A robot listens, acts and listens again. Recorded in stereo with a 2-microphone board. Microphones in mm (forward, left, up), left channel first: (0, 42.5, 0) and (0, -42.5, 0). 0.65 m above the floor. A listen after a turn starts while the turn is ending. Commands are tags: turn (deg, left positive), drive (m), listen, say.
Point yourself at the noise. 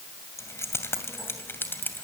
<turn deg="25"/>
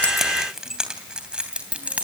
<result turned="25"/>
<turn deg="-15"/>
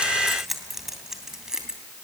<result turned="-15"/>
<turn deg="-10"/>
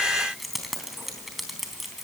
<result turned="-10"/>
<say>Found it: keys jangling, straight ahead, 2 to 4 m away.</say>